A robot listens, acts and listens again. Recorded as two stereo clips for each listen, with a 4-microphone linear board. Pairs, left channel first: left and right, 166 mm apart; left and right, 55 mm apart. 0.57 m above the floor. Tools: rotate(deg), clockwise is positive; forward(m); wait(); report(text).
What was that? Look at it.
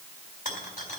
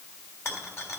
rotate(-50)
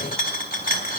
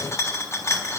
rotate(-75)
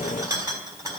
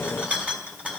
rotate(20)
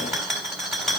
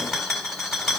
report("Facing the rattle, 2 to 4 m away.")